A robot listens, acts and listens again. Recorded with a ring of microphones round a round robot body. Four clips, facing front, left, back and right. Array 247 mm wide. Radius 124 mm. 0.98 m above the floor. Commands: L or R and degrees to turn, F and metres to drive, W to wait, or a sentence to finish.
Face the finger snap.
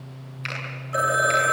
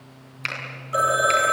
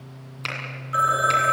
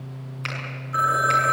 L150
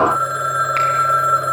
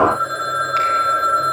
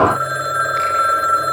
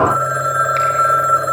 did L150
W
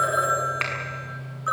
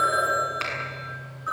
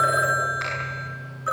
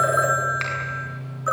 R10
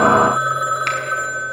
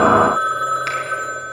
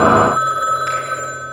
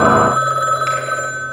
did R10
W
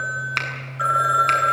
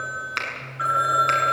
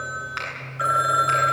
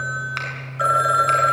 Facing the finger snap.